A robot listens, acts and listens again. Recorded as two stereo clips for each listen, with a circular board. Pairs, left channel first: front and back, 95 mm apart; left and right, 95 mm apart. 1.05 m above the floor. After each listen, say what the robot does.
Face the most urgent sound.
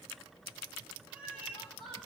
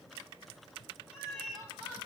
Keep listening.
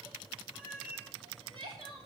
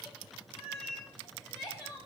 Turn 150° left.
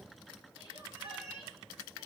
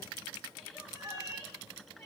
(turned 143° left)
Keep listening.
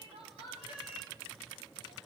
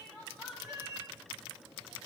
Facing the crying, over 4 m away.